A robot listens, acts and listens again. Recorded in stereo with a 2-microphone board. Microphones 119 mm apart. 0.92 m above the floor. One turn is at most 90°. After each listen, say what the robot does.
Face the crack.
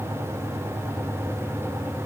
Keep listening.
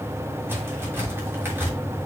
Turn 15° right.
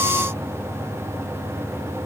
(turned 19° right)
Keep listening.
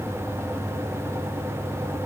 I heard a crack, but can't make it out now. It was about straight ahead or 145° right.